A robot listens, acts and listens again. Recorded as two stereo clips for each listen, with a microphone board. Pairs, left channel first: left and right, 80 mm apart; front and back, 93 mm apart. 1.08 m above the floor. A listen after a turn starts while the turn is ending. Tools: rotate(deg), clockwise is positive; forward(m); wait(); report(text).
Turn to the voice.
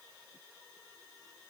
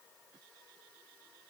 wait()
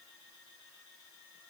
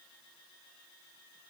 wait()
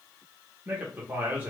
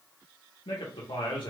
rotate(25)
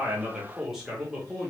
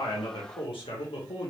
report("Found it: a man speaking, straight ahead, under 1 m away.")